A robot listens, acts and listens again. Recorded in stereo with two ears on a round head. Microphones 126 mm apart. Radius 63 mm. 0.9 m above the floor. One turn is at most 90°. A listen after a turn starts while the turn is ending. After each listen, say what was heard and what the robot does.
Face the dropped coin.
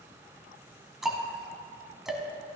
Keep listening.
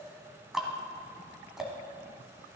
Keep listening.
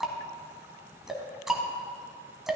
I can't make out a dropped coin to turn to.